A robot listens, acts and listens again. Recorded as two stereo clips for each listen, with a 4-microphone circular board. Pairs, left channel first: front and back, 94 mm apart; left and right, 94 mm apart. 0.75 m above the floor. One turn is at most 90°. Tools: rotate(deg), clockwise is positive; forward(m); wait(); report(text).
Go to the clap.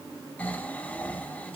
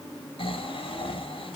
wait()
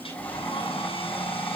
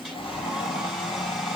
wait()
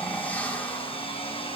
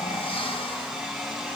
report("I can't make out a clap to turn to.")